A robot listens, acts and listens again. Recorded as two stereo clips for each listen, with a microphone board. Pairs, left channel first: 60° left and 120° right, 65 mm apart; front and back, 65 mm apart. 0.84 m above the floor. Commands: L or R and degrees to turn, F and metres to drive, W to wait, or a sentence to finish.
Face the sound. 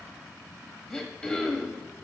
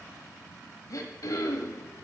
R15
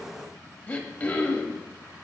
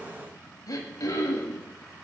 Facing the throat clearing, 1 to 2 m away.